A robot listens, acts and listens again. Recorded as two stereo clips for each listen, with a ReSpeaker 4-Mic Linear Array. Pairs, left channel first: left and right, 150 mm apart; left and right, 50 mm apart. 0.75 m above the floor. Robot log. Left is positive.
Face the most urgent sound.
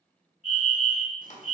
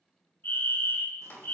note: The fire alarm: about 50° left or 130° left.
cmd yaw +50
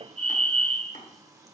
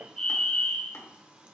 note: So it is at 10° left.
cmd yaw +10
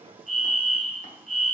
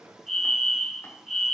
end: Facing the fire alarm.